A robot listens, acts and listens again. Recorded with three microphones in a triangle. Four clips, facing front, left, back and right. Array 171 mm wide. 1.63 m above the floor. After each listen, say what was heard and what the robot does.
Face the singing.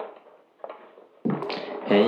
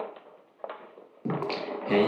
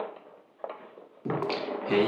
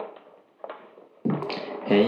The singing: 35° right. Turn 35° right.
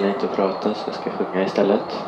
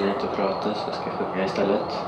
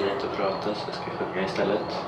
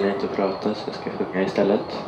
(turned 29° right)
The singing is now 20° right. Turn 20° right.
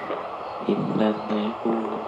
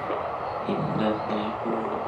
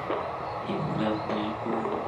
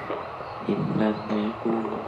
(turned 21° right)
The singing is now 20° right. Turn 20° right.
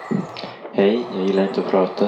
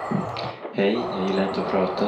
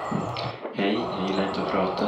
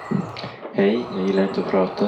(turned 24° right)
Facing the singing.